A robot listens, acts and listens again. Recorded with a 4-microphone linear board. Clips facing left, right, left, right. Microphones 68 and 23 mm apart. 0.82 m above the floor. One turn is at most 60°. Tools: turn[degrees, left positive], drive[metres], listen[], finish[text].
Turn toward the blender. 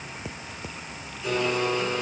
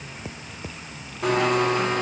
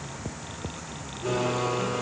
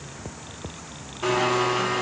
Thought: The blender: about 65° right or 115° right.
Action: turn[-60]
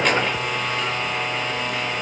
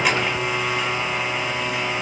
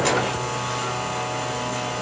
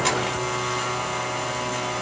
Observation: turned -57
Thought: So it is at 10° right.
Action: turn[-10]
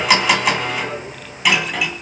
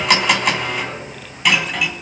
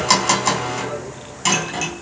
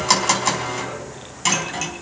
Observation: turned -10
Action: finish[Facing the blender, 2 to 4 m away.]